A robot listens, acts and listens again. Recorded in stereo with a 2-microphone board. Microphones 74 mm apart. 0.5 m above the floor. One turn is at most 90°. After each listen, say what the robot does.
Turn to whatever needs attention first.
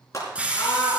Turn 45° left.
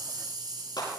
Turn 90° left.
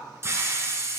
Keep listening.
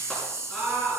Turn 10° left.
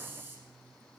Keep listening.
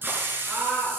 Facing the scream.